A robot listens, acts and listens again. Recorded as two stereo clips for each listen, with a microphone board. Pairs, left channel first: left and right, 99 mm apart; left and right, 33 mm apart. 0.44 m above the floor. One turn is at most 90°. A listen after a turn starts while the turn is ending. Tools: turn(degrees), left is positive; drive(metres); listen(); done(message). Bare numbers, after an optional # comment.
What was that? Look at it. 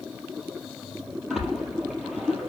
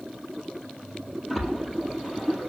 turn(-30)
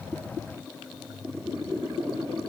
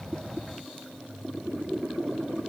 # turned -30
listen()
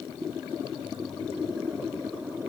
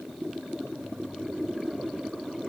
done("I heard a splash, but can't make it out now. It was about 25° left or 145° right.")